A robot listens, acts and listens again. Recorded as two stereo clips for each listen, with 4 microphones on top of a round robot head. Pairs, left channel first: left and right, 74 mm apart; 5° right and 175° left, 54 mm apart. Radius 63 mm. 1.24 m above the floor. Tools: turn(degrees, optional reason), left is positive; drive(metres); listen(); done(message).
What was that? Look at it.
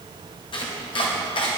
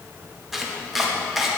turn(degrees=90, reason="The chopping: 90° left.")
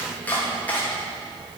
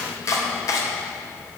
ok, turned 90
turn(degrees=20, reason="The chopping is now 20° left.")
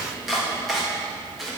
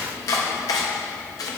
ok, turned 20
done("Facing the chopping, 2 to 4 m away.")